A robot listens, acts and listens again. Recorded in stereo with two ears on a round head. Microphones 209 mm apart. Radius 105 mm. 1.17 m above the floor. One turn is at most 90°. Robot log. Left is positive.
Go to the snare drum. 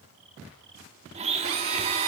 cmd idle
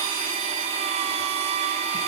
cmd idle
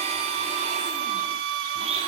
end: I can't make out a snare drum to turn to.